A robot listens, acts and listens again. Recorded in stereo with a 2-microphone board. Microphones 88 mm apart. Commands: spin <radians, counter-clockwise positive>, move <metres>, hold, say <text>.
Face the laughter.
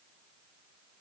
hold
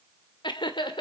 spin 1.05
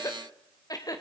spin 0.79
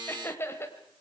spin 0.52
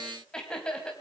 spin 0.17
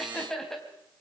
say Facing the laughter, 2 to 4 m away.